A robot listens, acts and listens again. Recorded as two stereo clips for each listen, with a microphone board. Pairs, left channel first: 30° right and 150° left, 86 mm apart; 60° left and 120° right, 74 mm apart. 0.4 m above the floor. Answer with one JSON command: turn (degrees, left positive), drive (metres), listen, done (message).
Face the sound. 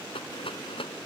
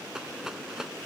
{"turn": -40}
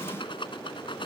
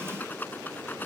{"done": "Found it: a rattle, straight ahead."}